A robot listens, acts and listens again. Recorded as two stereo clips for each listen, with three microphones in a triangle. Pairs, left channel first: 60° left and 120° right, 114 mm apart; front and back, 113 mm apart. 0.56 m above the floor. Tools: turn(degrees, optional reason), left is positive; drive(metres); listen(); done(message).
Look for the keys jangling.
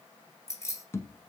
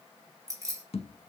turn(degrees=120, reason="The keys jangling: 120° left.")
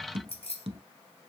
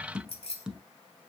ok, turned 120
turn(degrees=30, reason="The keys jangling is now 30° left.")
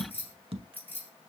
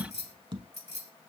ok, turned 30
turn(degrees=-15, reason="The keys jangling is now 15° right.")
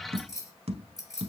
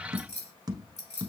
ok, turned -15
done("Facing the keys jangling, over 4 m away.")